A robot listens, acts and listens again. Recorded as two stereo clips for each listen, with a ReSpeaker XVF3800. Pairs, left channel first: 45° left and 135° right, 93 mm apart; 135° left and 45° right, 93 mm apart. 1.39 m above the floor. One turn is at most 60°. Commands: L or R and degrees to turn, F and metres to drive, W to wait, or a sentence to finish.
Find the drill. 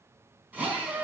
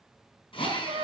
L60
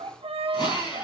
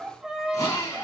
L60
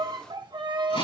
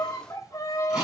L35
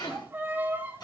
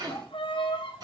Found it: a drill, straight ahead, over 4 m away.